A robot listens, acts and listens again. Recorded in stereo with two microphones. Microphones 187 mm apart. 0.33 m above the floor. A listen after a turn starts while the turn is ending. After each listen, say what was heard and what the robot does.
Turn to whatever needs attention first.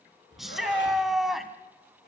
Turn 30° left.
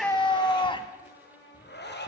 So it is at 150° left. Turn 150° left.
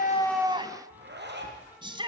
The shout is now 30° right. Turn 30° right.
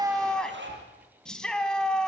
Found it: a shout, straight ahead, 2 to 4 m away.